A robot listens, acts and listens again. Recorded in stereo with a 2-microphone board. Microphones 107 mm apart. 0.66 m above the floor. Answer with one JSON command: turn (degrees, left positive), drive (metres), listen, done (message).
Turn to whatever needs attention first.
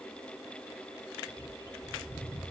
{"listen": true}
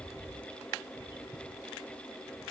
{"listen": true}
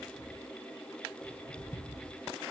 {"done": "I can't make out anything urgent, only a bird."}